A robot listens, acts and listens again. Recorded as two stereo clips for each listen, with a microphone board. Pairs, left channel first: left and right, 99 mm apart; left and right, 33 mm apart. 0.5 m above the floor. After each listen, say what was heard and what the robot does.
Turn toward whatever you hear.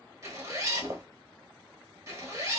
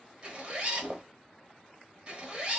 The zipper: about 30° right or 150° right. Turn 30° right.
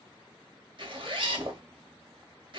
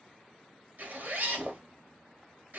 So it is at 120° right. Turn 120° right.
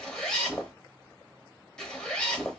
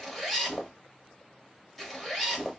Facing the zipper.